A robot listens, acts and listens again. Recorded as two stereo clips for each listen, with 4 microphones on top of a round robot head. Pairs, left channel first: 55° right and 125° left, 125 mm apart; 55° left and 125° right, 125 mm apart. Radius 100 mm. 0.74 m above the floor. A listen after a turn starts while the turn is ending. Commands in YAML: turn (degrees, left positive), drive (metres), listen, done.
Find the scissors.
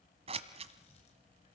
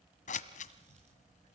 turn: 80
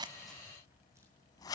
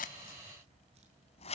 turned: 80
turn: 10
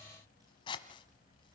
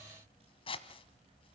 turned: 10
done: "Facing the scissors, 1 to 2 m away."